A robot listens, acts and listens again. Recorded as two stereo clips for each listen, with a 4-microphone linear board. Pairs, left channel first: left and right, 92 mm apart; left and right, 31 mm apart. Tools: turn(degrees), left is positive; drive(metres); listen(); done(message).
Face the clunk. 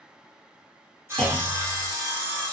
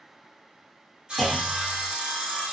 turn(degrees=30)
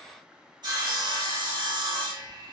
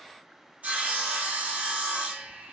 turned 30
listen()
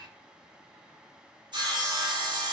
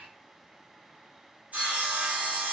done("I heard a clunk, but can't make it out now. It was about 20° right or 140° left.")